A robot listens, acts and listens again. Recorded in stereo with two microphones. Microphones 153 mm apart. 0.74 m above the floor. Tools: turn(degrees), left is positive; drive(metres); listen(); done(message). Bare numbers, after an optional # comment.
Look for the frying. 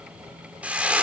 turn(-30)
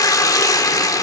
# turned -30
# So it is at 25° left.
turn(25)
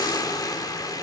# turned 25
# The frying is now 25° left.
turn(25)
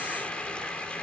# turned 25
listen()
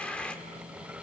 listen()
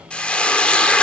# The frying is now 10° left.
turn(10)
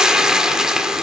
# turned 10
done("Found it: frying, straight ahead, 1 to 2 m away.")